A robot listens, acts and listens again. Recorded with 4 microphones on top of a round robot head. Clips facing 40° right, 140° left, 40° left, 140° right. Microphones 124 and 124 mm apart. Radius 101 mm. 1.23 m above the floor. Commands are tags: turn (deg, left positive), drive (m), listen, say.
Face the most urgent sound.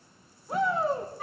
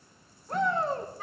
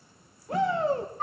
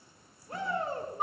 <turn deg="45"/>
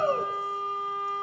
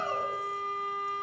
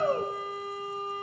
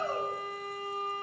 <say>Facing the shout, 1 to 2 m away.</say>